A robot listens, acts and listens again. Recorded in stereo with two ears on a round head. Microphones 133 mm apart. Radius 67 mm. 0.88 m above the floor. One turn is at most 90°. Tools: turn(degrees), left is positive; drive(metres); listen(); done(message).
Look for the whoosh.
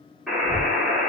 turn(degrees=-35)
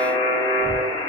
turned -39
done("Facing the whoosh, 2 to 4 m away.")